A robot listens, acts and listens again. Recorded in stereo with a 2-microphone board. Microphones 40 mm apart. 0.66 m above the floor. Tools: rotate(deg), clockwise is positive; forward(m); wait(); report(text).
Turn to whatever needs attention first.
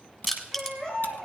rotate(-20)
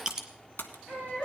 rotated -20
rotate(-140)
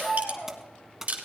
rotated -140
rotate(-30)
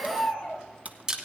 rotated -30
report("Facing the baby crying, over 4 m away.")